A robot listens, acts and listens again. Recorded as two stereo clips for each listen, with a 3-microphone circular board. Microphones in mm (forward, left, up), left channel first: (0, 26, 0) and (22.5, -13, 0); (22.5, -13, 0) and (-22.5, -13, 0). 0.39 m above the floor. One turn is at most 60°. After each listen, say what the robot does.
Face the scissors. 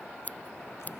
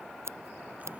Turn 60° left.
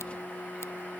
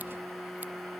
Turn 60° left.
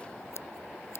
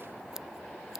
Turn 60° left.
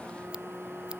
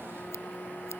Turn 40° left.
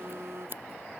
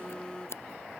Turn 25° right.
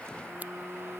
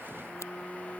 Keep listening.
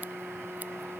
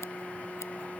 Keep listening.
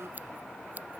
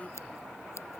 Turn 10° right.
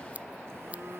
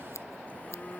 Found it: scissors, straight ahead.